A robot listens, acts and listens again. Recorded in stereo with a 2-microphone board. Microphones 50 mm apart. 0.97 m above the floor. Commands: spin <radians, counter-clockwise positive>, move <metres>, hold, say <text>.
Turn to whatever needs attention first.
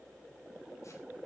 hold
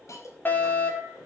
spin 0.70
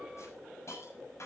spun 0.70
hold
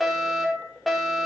say Found it: a fire alarm, straight ahead, over 4 m away.